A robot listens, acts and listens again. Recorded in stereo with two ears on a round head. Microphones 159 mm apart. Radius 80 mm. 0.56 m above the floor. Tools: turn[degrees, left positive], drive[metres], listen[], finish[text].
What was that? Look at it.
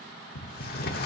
Thought: The sliding door: about 60° left or 120° left.
Action: turn[60]
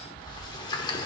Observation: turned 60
Thought: So it is at 30° left.
Action: turn[30]
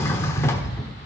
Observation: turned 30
Thought: The sliding door is now 20° left.
Action: turn[20]
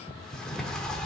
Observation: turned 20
Action: finish[Found it: a sliding door, straight ahead.]